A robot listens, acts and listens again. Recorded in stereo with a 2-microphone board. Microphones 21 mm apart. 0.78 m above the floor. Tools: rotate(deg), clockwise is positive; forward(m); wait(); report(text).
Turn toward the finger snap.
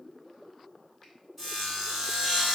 wait()
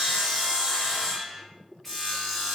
wait()
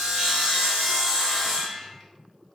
report("I can't make out a finger snap to turn to.")